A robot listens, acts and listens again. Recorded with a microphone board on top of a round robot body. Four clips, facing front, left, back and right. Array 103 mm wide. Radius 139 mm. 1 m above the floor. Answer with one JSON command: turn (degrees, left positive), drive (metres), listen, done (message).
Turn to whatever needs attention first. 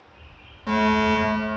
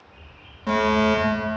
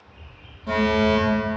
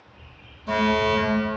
{"turn": 70}
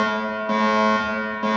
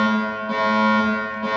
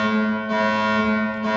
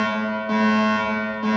{"turn": -10}
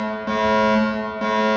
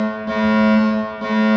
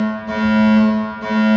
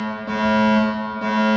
{"done": "Facing the fire alarm."}